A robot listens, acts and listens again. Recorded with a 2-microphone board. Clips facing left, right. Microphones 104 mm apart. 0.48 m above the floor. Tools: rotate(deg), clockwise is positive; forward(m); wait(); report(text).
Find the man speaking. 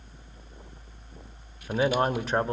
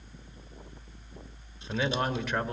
rotate(-35)
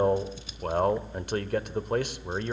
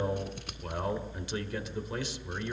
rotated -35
rotate(-105)
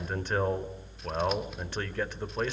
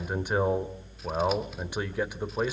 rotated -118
rotate(15)
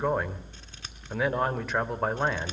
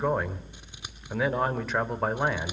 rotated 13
report("Facing the man speaking, 1 to 2 m away.")